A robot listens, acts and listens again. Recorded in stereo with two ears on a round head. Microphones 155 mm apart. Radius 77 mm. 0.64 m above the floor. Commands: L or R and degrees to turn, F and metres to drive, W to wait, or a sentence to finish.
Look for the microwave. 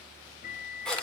L50
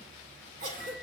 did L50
W
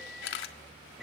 Facing the microwave.